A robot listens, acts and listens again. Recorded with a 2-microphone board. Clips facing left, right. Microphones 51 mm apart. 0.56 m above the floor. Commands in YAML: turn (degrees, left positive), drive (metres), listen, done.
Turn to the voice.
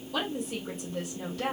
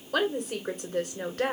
turn: -55
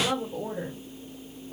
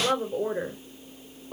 turn: -60
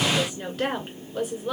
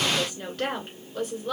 done: "Found it: a woman speaking, straight ahead, 2 to 4 m away."